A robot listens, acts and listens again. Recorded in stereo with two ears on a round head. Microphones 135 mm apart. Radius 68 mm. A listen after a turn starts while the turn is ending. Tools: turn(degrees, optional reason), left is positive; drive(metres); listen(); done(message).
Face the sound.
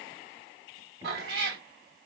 turn(degrees=-65, reason="The cat meowing: about 65° right or 115° right.")
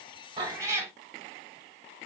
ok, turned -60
turn(degrees=-20, reason="So it is at 20° right.")
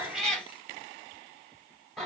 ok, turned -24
done("Found it: a cat meowing, straight ahead.")